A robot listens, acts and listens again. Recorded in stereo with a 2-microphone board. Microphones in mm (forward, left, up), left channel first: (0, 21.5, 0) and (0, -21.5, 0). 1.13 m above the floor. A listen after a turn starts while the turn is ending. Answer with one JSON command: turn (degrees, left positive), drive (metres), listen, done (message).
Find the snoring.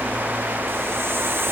{"listen": true}
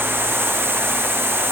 {"listen": true}
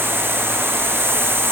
{"done": "I can't make out snoring to turn to."}